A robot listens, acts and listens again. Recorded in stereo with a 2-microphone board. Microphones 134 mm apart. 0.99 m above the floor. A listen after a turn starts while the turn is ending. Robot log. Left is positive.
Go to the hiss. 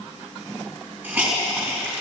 note: The hiss: about 15° right or 165° right.
cmd yaw -15
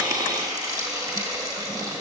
note: So it is at 150° right.
cmd yaw -150
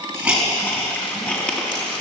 note: The hiss is now 10° left.
cmd yaw +10
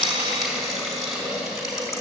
cmd fwd 1.0
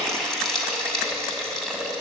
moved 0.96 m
cmd fwd 1.0
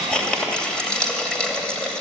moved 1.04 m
cmd fwd 1.0
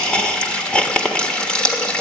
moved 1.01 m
note: The hiss is now 10° left.
cmd yaw +10
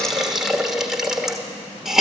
cmd fwd 1.0
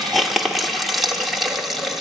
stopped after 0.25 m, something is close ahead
end: Arrived at the hiss, straight ahead.